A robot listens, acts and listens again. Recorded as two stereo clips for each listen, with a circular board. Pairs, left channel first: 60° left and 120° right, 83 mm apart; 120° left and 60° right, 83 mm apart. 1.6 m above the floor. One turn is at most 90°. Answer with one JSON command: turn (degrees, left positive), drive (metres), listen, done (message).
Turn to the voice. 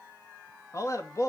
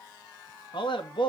{"turn": 90}
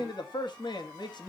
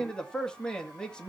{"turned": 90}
{"turn": 40}
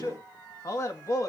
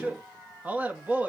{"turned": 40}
{"turn": 10}
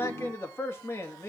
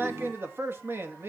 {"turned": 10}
{"done": "Found it: a man speaking, straight ahead, 2 to 4 m away."}